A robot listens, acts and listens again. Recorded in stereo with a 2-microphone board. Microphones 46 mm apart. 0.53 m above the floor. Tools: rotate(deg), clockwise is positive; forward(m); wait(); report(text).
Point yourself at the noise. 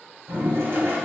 rotate(60)
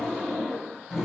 report("Facing the toilet flushing.")